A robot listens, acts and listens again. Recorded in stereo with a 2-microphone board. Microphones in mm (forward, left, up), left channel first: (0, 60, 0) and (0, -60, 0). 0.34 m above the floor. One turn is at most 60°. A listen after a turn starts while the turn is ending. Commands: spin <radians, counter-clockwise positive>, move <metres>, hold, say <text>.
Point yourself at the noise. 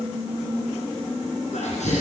spin 1.05
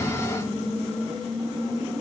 hold
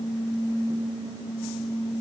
say I heard a sneeze, but can't make it out now. It was about 15° left or 45° left.